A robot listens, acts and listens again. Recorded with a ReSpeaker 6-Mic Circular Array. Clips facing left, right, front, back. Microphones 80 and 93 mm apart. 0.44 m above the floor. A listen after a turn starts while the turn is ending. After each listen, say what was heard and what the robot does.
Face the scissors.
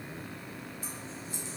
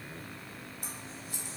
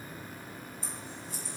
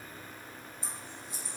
The scissors: 110° right. Turn 110° right.
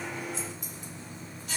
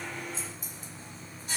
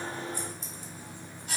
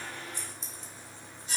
The scissors is now 30° right. Turn 30° right.
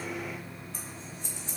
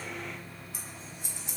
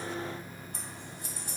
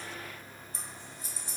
The scissors is now 10° right. Turn 10° right.
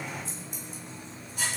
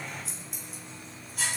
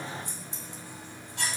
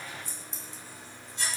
Facing the scissors.